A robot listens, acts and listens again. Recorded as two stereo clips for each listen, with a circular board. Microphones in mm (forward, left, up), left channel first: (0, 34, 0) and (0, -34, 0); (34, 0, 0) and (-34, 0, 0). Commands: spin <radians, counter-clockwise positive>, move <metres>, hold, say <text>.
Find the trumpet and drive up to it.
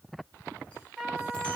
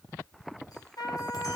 spin -0.17
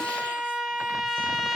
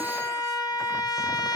move 1.0
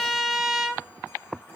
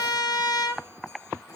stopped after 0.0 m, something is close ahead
say Something is in my way. I am facing the trumpet but have not reached it.